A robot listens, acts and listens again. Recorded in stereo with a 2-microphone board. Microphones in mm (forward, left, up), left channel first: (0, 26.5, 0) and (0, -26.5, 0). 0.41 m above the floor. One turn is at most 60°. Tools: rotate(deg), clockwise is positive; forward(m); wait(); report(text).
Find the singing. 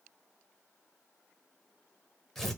wait()
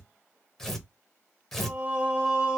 rotate(25)
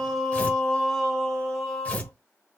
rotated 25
rotate(-15)
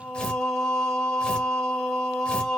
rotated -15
rotate(-10)
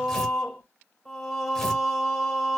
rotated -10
report("Facing the singing, 2 to 4 m away.")